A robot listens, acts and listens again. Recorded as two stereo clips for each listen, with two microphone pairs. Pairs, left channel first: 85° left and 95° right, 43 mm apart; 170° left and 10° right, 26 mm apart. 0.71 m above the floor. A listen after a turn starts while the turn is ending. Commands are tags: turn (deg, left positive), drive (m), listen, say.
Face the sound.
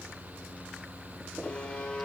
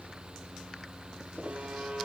<turn deg="20"/>
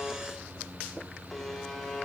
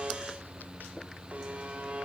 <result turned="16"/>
<say>Found it: a buzzer, straight ahead, 1 to 2 m away.</say>